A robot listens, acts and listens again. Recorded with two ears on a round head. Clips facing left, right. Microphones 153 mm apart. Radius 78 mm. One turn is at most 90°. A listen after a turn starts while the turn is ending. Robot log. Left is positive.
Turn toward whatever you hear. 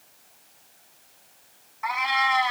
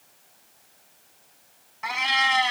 note: The cat meowing: about 30° right or 150° right.
cmd yaw -30
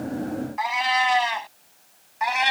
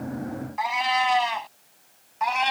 note: So it is at 10° left.
cmd yaw +10
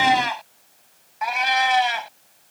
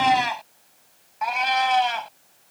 note: The cat meowing is now 10° left.
cmd yaw +10
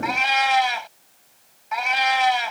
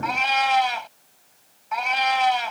end: Facing the cat meowing.